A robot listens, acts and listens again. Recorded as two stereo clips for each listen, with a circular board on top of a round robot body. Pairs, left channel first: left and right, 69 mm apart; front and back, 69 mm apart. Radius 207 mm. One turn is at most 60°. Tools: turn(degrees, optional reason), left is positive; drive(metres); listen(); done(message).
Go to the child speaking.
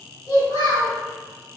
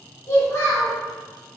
turn(degrees=45, reason="The child speaking: 45° left.")
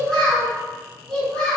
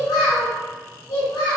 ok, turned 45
drive(metres=1.0)
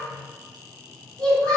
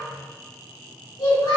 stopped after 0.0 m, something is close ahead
turn(degrees=10, reason="The child speaking is now 10° left.")
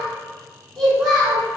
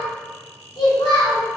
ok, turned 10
done("Something is in my way. I am facing the child speaking but have not reached it.")